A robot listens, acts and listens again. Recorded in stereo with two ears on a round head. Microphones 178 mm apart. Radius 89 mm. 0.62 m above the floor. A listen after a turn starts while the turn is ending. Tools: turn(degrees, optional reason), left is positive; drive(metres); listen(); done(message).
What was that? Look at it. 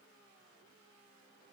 listen()
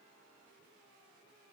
listen()
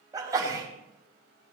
turn(degrees=-20, reason="The sneeze: about 20° right or 160° right.")
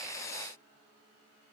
listen()
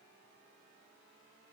done("I heard a sneeze, but can't make it out now. It was about straight ahead or 140° right.")